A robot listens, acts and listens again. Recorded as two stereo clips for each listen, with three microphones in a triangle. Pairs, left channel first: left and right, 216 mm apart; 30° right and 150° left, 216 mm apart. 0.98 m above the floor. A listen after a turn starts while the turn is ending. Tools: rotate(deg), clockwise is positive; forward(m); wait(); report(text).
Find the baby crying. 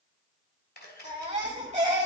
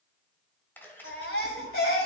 rotate(30)
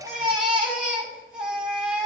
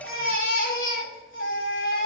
report("Facing the baby crying, 2 to 4 m away.")